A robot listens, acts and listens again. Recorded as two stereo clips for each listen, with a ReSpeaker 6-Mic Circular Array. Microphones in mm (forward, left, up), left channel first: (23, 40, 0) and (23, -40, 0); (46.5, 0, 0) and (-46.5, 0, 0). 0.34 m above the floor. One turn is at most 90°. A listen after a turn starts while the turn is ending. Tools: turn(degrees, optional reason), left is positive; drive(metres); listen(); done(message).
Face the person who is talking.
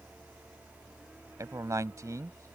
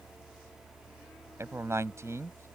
turn(degrees=-90, reason="The man speaking: 130° right.")
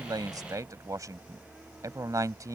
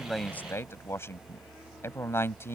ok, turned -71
turn(degrees=-55, reason="The man speaking is now 55° right.")
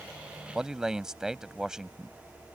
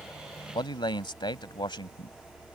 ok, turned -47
turn(degrees=-10, reason="The man speaking is now 10° right.")
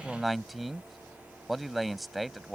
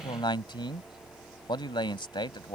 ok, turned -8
done("Found it: a man speaking, straight ahead.")